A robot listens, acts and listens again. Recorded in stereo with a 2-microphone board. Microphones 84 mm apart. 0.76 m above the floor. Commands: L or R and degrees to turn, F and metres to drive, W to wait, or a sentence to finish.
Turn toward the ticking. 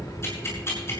L30
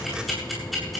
Found it: ticking, straight ahead.